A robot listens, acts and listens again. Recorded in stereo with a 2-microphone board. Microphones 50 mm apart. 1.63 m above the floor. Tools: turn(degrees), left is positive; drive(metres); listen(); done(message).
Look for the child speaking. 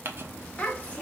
turn(degrees=30)
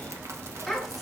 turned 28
listen()
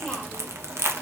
listen()
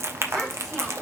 done("I heard a child speaking, but can't make it out now. It was about 5° left or 120° left.")